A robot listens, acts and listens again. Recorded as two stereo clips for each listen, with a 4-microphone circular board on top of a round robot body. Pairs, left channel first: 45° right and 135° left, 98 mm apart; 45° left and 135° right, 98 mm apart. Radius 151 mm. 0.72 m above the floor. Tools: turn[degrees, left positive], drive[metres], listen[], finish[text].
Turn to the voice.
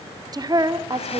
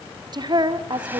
Thought: The woman speaking: straight behind.
Action: turn[180]
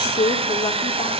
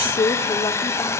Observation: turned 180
Action: finish[Found it: a woman speaking, straight ahead.]